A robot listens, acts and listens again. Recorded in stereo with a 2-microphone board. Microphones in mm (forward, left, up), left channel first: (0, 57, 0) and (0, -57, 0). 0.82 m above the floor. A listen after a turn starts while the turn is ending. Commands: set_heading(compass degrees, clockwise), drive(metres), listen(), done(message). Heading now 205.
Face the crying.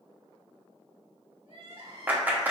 set_heading(260)
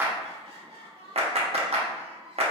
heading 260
set_heading(325)
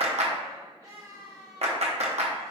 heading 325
set_heading(0)
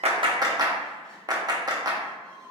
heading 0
set_heading(350)
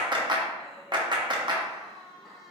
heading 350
done("Facing the crying, 1 to 2 m away.")